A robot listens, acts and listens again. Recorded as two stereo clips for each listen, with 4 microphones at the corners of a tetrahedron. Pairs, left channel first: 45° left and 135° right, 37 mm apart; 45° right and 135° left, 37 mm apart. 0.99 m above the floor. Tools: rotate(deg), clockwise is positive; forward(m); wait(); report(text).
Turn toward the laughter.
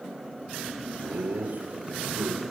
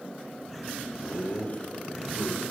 rotate(95)
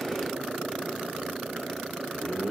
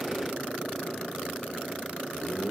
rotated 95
rotate(-30)
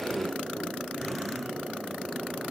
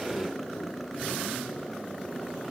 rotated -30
wait()
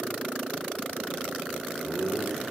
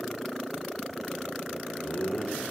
rotate(-10)
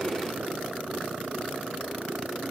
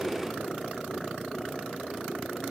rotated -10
wait()
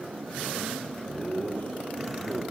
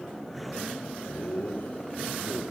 report("Facing the laughter, over 4 m away.")